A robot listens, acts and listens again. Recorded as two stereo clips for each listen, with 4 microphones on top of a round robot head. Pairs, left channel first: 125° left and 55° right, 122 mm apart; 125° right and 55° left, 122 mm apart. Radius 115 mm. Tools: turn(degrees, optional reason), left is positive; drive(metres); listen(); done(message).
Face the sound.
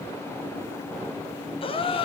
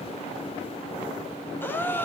turn(degrees=165, reason="The gasp: 165° left.")
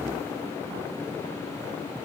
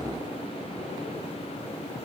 done("Facing where the gasp came from. I can't hear it now.")